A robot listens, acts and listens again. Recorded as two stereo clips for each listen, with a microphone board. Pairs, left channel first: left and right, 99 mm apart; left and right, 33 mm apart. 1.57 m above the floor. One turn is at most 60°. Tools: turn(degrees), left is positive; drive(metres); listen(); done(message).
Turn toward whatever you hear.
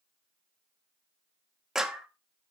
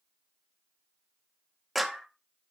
turn(degrees=-30)
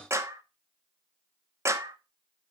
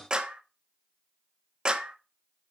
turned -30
turn(degrees=-60)
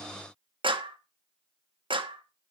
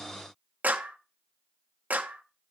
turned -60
turn(degrees=-60)
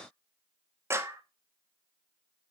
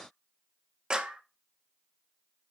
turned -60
turn(degrees=-30)
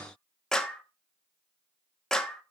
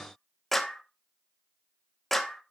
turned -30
turn(degrees=10)
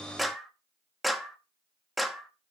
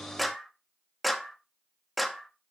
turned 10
done("Found it: a clap, straight ahead, 1 to 2 m away.")